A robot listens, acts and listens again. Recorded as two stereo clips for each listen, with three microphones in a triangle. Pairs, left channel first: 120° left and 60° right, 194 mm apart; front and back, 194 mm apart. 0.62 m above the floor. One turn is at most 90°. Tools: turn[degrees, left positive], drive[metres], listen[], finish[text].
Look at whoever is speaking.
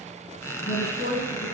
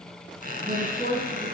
Thought: The woman speaking: 140° left.
Action: turn[90]
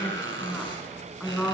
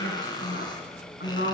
Thought: The woman speaking is now 25° left.
Action: turn[25]
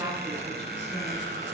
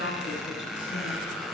Action: finish[Found it: a woman speaking, straight ahead.]